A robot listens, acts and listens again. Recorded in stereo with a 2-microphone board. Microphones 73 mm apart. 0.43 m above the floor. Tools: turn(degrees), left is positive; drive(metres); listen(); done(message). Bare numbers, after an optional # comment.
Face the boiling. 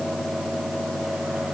listen()
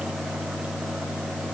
listen()
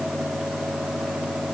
done("I can't make out boiling to turn to.")